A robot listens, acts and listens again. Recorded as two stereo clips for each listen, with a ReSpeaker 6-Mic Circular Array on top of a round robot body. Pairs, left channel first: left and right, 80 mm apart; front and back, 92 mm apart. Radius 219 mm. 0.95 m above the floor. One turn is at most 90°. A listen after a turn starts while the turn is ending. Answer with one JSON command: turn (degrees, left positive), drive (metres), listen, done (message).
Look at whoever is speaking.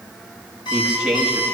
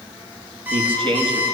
{"turn": -90}
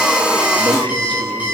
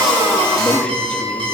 {"turn": -80}
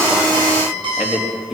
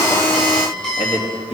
{"done": "Found it: a man speaking, straight ahead."}